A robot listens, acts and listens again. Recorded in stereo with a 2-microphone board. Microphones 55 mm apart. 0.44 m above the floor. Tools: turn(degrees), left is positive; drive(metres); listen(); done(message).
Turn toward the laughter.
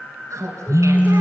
turn(degrees=-70)
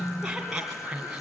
turn(degrees=-10)
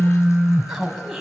done("Facing the laughter, 2 to 4 m away.")